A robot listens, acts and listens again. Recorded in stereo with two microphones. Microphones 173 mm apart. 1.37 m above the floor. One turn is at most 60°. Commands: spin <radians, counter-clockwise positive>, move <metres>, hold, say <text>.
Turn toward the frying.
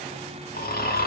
hold
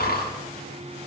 hold
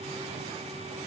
say I can't make out frying, only snoring.